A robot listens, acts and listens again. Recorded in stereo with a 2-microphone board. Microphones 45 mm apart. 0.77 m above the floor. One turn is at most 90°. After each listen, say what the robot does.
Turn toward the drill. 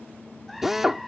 Turn 30° right.
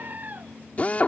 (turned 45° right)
Turn 35° left.
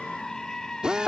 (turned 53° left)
Turn 20° right.
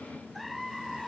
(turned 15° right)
Keep listening.
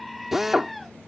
Found it: a drill, straight ahead.